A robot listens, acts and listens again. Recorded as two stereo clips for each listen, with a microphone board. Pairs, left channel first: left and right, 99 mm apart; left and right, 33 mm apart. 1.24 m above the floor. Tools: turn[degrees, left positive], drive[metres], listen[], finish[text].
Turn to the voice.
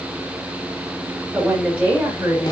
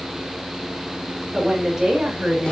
Action: turn[-30]
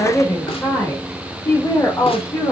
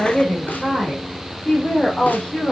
Thought: So it is at 35° left.
Action: turn[35]
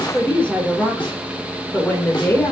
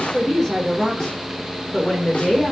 Thought: The woman speaking is now 20° left.
Action: turn[20]
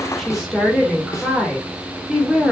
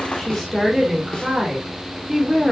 Action: finish[Facing the woman speaking.]